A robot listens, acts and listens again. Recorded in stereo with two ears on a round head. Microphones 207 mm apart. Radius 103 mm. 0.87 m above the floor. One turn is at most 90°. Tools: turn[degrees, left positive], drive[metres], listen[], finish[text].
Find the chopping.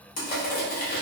Action: listen[]
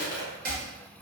Thought: The chopping: about 40° right or 140° right.
Action: turn[-40]
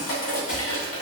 Action: listen[]
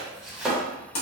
Action: finish[Found it: chopping, straight ahead, under 1 m away.]